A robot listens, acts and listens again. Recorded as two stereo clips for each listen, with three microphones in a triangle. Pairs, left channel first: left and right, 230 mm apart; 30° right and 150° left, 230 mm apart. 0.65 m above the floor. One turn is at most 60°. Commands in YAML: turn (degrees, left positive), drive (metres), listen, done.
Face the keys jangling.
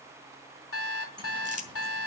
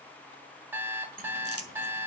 turn: -60
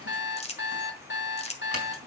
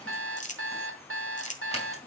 turn: -60
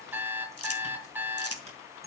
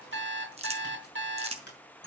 turn: -35
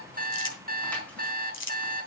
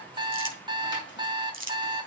done: "I heard keys jangling from this way, but can't make it out now."